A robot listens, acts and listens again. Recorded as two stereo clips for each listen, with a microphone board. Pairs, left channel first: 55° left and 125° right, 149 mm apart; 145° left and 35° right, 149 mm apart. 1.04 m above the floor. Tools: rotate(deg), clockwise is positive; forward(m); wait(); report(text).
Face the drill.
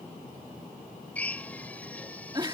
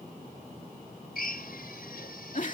rotate(-135)
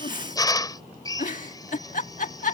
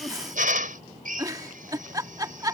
rotate(10)
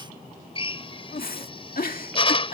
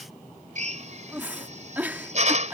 report("Found it: a drill, straight ahead.")